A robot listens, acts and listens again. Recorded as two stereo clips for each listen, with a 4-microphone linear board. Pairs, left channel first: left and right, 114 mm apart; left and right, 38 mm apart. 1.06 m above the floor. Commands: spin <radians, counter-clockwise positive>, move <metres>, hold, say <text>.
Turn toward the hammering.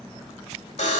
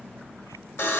hold
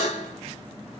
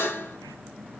hold
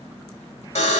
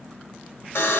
say I can't make out hammering to turn to.